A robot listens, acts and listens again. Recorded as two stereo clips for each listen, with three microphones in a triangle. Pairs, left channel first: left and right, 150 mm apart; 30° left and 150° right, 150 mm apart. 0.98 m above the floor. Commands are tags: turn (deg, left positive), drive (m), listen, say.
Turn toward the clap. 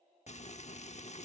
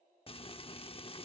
<listen/>
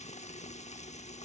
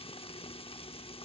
<listen/>
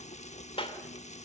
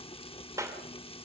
<turn deg="140"/>
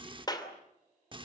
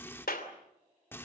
<turn deg="30"/>
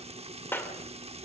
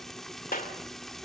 <turn deg="15"/>
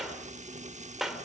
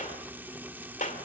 <say>Facing the clap, 2 to 4 m away.</say>